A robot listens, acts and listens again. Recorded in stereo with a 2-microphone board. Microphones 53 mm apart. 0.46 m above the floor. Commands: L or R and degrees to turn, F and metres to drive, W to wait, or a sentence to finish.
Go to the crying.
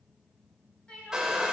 L20
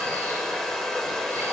W
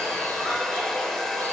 W
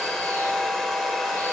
I heard crying, but can't make it out now. It was about straight ahead or 140° left. I did not reach it.